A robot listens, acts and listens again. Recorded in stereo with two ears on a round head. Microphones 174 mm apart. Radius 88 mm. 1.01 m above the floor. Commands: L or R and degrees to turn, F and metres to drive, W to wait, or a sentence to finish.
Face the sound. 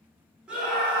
R30
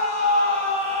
R145
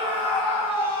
R10
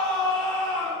Facing the scream.